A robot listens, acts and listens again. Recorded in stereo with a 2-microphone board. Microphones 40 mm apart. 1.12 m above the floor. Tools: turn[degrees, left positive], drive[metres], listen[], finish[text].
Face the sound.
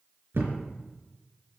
Thought: The thud: about 70° right or 110° right.
Action: turn[-70]
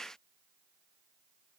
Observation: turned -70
Action: listen[]
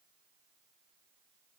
Action: finish[I heard a thud, but can't make it out now. It was about straight ahead or 40° right.]